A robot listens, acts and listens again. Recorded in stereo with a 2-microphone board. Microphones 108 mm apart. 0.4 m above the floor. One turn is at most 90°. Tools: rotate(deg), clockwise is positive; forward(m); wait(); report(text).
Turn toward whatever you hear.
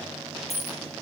rotate(-65)
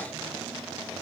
wait()
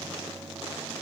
report("I heard a dropped coin, but can't make it out now. It was about straight ahead or 50° left.")